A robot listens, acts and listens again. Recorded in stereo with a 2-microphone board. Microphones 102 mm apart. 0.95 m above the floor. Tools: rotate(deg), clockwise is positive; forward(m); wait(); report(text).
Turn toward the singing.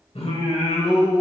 rotate(-90)
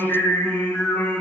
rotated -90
rotate(-25)
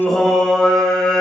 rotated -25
rotate(-10)
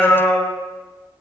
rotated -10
report("Found it: singing, straight ahead.")